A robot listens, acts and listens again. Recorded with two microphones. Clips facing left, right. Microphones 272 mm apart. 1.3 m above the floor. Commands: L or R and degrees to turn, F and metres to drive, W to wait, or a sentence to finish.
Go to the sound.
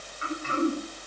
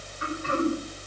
R70
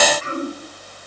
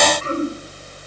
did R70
R45
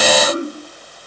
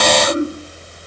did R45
F1.0
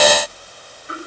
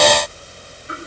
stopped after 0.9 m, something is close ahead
W
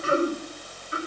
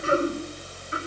Something is in my way. I am facing the throat clearing but have not reached it.